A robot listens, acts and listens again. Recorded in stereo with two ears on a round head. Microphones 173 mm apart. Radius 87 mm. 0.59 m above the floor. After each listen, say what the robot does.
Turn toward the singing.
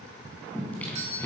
Turn 30° left.
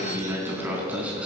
Found it: singing, straight ahead, 2 to 4 m away.